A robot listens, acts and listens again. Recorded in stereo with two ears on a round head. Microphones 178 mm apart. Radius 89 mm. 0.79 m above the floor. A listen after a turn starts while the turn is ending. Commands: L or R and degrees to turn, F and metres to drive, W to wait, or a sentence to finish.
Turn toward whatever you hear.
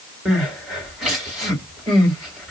L30
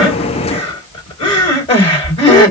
L150
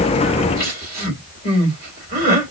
R50
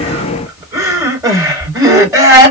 R15
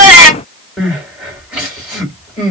Facing the crying, 2 to 4 m away.